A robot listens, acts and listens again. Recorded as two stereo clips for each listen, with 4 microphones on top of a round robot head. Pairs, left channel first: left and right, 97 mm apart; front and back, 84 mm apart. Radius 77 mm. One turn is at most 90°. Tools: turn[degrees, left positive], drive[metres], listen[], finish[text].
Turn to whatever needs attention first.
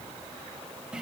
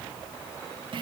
Action: listen[]
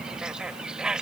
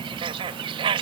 Action: listen[]
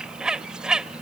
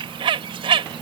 Action: finish[I can't make out anything urgent to turn to.]